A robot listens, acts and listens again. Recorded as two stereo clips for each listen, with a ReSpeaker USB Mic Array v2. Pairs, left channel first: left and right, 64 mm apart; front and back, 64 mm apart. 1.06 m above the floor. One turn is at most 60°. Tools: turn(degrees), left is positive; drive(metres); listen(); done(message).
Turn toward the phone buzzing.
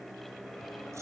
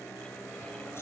listen()
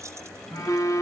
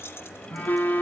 turn(degrees=60)
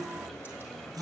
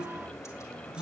turn(degrees=10)
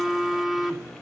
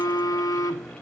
done("Facing the phone buzzing.")